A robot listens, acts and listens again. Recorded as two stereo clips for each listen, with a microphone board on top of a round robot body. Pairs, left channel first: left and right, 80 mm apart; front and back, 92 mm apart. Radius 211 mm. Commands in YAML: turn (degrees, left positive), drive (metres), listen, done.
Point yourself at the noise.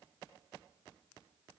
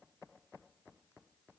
listen: true
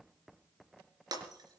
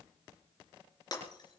turn: -50
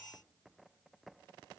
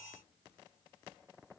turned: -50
done: "I heard breaking glass from this way, but can't make it out now."